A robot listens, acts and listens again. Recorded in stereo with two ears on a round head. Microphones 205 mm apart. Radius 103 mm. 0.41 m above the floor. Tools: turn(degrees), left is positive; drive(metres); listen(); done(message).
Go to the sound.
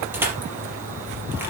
turn(degrees=-30)
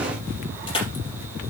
turn(degrees=25)
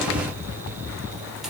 listen()
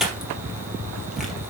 drive(metres=1.0)
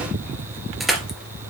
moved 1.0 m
drive(metres=1.0)
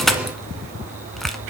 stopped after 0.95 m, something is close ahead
done("Arrived at the crushing, straight ahead.")